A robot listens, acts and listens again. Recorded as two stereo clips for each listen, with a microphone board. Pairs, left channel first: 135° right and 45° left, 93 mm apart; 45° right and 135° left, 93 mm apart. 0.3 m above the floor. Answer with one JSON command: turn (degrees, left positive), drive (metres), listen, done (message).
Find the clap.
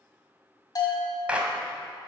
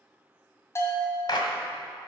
{"turn": -30}
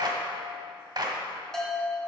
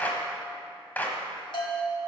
{"turn": 20}
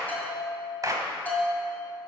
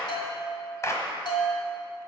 {"done": "Found it: a clap, straight ahead, 1 to 2 m away."}